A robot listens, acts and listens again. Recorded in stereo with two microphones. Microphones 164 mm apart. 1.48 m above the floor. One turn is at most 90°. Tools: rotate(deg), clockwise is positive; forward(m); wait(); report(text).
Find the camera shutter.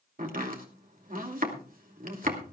wait()
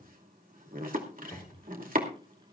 wait()
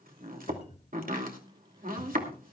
report("I can't make out a camera shutter, only chopping and a cupboard door.")